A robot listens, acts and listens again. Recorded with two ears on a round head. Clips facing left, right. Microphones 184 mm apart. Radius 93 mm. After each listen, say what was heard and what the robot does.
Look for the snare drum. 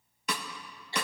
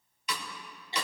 The snare drum: about 40° left or 140° left. Turn 40° left.
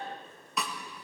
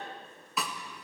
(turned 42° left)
Found it: a snare drum, straight ahead, 1 to 2 m away.